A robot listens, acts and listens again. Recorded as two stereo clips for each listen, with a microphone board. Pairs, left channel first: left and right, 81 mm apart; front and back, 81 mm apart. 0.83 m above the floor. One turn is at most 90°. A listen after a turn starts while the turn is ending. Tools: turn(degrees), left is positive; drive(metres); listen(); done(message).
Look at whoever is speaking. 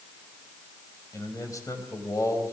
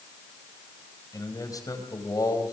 turn(degrees=40)
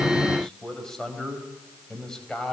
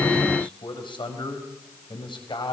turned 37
done("Found it: a man speaking, straight ahead, over 4 m away.")